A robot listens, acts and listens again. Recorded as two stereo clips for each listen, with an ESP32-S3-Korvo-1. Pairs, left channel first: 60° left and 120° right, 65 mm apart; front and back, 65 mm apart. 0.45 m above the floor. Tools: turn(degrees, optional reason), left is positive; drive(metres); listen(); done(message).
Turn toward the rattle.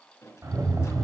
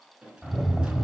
turn(degrees=-105, reason="The rattle: 105° right.")
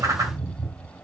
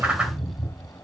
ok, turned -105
done("Facing the rattle.")